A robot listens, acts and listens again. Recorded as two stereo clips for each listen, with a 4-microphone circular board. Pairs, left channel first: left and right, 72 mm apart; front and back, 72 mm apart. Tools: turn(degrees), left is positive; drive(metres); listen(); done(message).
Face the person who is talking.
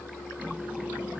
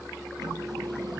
listen()
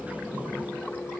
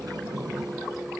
listen()
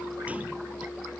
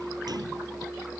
done("I can't make out anyone speaking, only a sliding door.")